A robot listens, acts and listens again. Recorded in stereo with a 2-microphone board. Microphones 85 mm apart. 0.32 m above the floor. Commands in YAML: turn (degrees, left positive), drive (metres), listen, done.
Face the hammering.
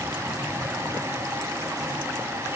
listen: true
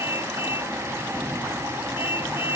listen: true
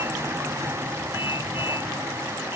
done: "I can't make out hammering to turn to."